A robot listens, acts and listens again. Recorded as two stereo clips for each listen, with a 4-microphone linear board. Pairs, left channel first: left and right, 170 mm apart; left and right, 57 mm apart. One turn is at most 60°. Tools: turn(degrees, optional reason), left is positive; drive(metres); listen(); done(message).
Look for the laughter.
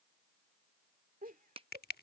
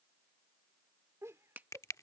turn(degrees=-55, reason="The laughter: about 55° right or 125° right.")
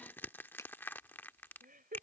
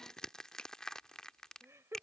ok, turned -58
turn(degrees=-55, reason="So it is at 55° right.")
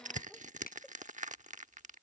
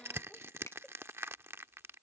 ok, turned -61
listen()
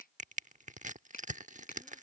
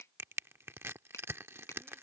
listen()
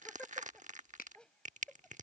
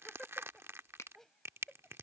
done("Found it: laughter, straight ahead.")